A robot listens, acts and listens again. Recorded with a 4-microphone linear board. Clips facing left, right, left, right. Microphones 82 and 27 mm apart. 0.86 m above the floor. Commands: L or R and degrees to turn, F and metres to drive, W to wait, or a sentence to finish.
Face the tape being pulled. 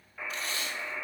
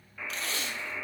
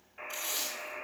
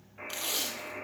R90
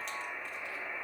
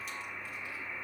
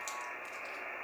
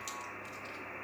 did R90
W
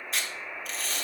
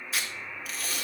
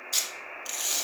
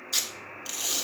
Found it: tape being pulled, straight ahead.